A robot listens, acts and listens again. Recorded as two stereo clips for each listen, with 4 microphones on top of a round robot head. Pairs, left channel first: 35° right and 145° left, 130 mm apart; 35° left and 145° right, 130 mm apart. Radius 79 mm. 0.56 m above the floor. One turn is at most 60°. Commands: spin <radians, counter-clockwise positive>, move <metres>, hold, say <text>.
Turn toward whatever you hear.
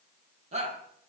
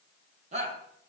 spin 1.05
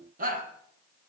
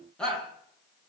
spin 1.05
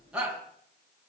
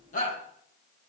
spin 1.05
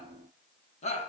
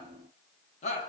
say Facing the shout.